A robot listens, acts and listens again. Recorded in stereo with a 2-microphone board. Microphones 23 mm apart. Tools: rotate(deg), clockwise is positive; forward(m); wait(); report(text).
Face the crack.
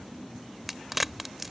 rotate(30)
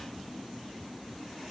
wait()
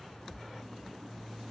report("I heard a crack, but can't make it out now. It was about 20° left or 140° right.")